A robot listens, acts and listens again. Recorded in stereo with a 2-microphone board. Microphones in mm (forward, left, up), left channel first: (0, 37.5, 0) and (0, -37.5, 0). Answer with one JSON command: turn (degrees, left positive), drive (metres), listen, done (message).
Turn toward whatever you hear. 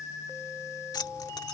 {"turn": 65}
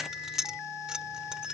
{"turn": -10}
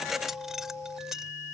{"done": "Facing the keys jangling."}